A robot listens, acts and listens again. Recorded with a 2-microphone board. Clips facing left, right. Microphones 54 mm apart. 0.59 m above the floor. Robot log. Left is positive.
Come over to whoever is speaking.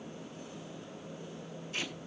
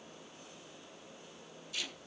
cmd idle
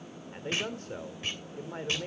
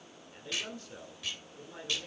note: The man speaking: about 40° left or 140° left.
cmd yaw +40
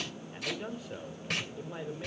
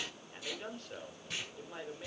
note: So it is at 10° left.
cmd yaw +10
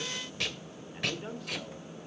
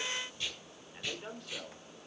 cmd fwd 1.0
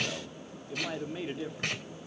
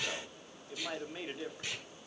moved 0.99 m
cmd fwd 1.0
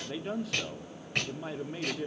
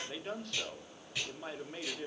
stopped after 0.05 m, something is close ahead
end: Arrived at the man speaking, straight ahead.